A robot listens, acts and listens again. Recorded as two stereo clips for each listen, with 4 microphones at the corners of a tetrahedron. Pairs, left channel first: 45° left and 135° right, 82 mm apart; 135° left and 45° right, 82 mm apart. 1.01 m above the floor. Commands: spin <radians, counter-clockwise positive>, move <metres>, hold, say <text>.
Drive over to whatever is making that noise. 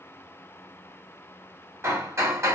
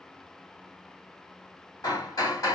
spin 2.97
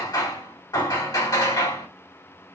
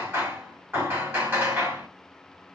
spin 0.26
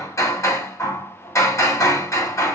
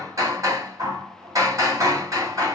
move 1.0
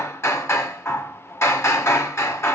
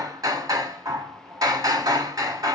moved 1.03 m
move 1.0
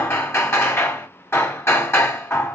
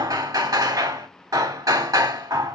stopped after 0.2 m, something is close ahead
spin -0.17
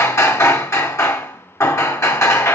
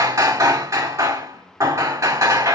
say I am next to the hammering.